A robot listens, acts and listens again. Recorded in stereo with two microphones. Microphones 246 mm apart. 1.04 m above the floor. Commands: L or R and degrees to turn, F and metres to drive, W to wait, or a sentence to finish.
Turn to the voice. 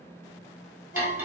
W
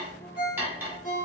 W
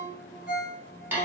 I can't make out anyone speaking, only cutlery clinking and a ringtone.